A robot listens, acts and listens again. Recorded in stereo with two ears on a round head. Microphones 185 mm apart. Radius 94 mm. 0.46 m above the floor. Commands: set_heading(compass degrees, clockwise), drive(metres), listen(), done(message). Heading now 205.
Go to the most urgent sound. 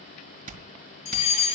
set_heading(170)
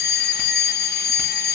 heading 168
set_heading(68)
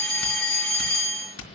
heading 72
drive(1.0)
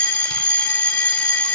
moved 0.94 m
drive(1.0)
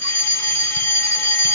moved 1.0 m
set_heading(57)
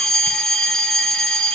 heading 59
drive(1.0)
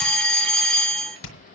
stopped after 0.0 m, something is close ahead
done("I am next to the fire alarm.")